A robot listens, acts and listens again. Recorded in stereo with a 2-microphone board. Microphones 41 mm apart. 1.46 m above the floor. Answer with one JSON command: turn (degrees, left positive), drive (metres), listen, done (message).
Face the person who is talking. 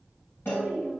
{"turn": -70}
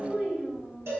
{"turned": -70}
{"turn": -25}
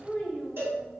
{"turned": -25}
{"done": "Found it: a child speaking, straight ahead, 1 to 2 m away."}